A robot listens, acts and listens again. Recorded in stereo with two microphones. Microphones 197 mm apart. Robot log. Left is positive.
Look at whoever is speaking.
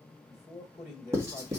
note: The man speaking: about 30° left or 150° left.
cmd yaw +30
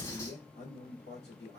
note: So it is at 115° left.
cmd yaw +115
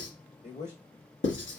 note: The man speaking is now 35° left.
cmd yaw +35
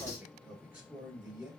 note: The man speaking is now 10° right.
cmd yaw -10
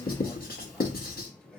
end: Found it: a man speaking, straight ahead.